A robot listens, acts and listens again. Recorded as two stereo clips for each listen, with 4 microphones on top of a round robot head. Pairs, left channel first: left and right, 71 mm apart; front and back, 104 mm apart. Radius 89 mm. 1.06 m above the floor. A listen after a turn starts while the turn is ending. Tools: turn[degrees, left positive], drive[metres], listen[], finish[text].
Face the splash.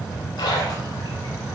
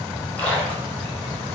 Thought: The splash: 70° left.
Action: turn[70]
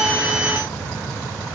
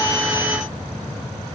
Action: finish[I heard a splash from this way, but can't make it out now.]